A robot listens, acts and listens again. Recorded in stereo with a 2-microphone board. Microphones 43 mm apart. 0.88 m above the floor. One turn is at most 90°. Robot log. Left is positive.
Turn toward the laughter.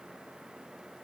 cmd idle
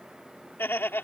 note: The laughter: about 65° left or 115° left.
cmd yaw +65
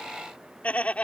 note: So it is at 35° left.
cmd yaw +35
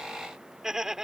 note: The laughter is now 15° right.
cmd yaw -15
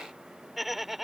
end: Found it: laughter, straight ahead.